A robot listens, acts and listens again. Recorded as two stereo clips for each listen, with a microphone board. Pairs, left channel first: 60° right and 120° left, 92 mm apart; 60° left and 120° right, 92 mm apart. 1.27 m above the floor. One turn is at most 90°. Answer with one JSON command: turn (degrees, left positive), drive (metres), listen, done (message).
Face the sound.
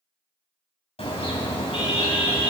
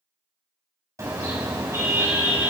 {"turn": -65}
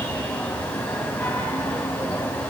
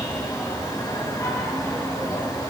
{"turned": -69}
{"done": "Found it: a car horn, straight ahead, 2 to 4 m away."}